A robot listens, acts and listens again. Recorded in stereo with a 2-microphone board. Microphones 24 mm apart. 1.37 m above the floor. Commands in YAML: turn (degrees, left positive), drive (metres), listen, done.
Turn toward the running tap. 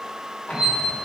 listen: true
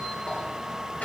listen: true
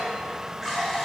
turn: -30
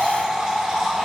turn: -145
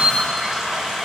done: "Facing the running tap, 1 to 2 m away."